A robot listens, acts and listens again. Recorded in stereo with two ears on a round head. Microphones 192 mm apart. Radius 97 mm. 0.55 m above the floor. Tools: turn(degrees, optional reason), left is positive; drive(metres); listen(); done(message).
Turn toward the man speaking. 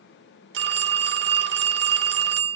listen()
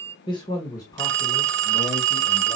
turn(degrees=15, reason="The man speaking: about 15° left or 165° left.")
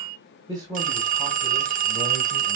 turn(degrees=-15, reason="So it is at 15° right.")
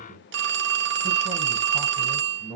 done("Facing the man speaking.")